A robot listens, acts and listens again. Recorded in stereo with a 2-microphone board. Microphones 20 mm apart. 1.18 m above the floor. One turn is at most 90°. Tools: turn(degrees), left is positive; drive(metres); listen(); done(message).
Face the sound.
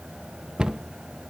turn(degrees=-40)
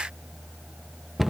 turn(degrees=-10)
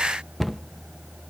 done("Found it: a cupboard door, straight ahead, under 1 m away.")